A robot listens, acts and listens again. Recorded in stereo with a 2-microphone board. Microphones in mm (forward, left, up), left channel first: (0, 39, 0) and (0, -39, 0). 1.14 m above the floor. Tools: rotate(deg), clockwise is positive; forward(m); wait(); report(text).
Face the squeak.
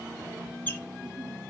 rotate(-20)
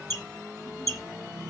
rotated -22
rotate(-140)
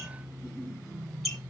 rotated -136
report("Facing the squeak.")